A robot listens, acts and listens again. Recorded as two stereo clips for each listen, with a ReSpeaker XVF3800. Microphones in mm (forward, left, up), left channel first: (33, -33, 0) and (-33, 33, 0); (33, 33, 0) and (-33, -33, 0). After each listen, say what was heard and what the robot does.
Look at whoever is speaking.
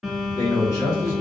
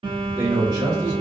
The man speaking: 100° right. Turn 100° right.
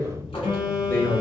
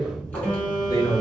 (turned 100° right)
Facing the man speaking, 1 to 2 m away.